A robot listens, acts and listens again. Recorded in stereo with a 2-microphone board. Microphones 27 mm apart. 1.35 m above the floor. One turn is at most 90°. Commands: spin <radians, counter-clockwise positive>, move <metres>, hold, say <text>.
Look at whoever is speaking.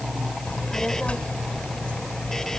spin 0.87
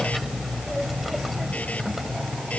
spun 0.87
say Found it: a child speaking, straight ahead.